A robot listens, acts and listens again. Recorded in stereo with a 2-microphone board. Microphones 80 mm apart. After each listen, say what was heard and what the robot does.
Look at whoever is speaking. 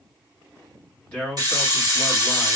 The man speaking: about 15° left or 165° left. Turn 15° left.
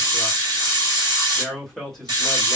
Found it: a man speaking, straight ahead.